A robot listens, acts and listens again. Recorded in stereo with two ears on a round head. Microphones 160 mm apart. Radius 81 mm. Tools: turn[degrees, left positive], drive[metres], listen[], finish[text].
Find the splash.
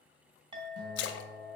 Action: turn[90]
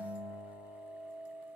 Action: finish[I heard a splash from this way, but can't make it out now.]